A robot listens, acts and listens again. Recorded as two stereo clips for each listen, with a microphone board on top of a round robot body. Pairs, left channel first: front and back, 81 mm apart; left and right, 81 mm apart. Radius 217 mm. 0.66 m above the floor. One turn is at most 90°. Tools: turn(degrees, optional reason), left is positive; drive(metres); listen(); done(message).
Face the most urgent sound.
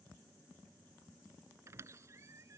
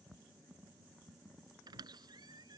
listen()
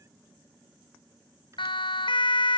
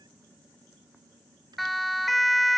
done("Facing the siren.")